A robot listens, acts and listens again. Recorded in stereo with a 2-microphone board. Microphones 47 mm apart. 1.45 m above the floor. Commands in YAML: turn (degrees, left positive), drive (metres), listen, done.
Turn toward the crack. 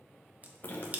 turn: -30
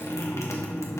listen: true
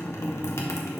done: "I heard a crack, but can't make it out now. It was about straight ahead or 120° right."